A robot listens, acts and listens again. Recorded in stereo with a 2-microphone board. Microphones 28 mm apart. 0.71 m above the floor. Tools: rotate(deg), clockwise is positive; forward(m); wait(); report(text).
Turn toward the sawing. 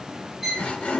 rotate(-50)
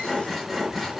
report("Facing the sawing.")